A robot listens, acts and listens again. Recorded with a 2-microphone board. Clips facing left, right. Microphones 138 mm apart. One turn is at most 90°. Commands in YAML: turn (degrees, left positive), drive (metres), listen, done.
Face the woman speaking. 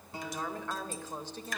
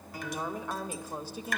turn: -30
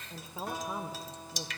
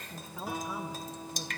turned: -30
turn: 25
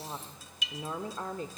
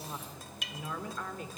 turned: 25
turn: 35
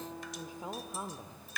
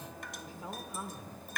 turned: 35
turn: 25
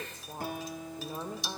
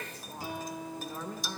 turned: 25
turn: 25
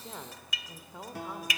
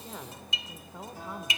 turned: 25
done: "Facing the woman speaking."